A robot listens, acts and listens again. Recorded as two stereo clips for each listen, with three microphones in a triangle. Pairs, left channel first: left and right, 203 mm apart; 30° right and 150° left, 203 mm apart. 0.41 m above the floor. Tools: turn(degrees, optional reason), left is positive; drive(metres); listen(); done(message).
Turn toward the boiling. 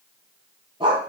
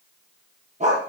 listen()
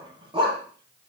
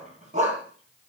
listen()
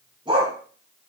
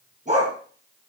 done("I can't make out boiling, only a dog barking.")